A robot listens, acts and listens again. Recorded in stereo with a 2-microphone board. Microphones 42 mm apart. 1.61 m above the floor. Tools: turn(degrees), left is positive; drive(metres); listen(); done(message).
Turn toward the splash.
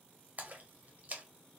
turn(degrees=-40)
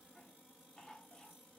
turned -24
listen()
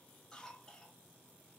done("I heard a splash, but can't make it out now. It was about 15° right or 115° right.")